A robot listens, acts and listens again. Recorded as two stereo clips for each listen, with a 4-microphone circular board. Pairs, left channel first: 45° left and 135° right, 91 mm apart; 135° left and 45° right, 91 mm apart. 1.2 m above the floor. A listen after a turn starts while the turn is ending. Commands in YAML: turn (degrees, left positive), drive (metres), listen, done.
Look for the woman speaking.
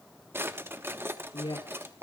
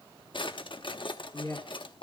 turn: 80
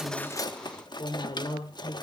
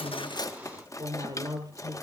done: "Facing the woman speaking."